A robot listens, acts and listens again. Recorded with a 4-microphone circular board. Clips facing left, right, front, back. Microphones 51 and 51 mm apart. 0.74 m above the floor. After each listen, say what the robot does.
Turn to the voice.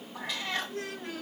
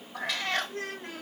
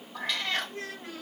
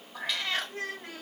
Turn 135° right.
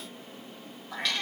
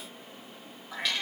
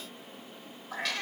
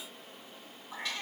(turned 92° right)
Turn 40° right.
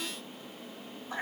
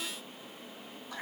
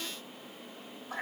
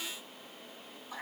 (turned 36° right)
Keep listening.
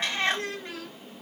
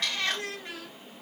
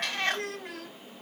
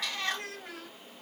Facing the child speaking, 2 to 4 m away.